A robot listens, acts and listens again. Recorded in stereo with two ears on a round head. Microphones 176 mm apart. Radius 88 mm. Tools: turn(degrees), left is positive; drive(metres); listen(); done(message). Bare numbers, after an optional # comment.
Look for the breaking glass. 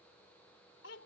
listen()
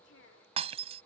# The breaking glass: about 35° right or 145° right.
turn(-35)
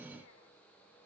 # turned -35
listen()
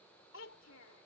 done("I heard breaking glass, but can't make it out now. It was about straight ahead or 110° right.")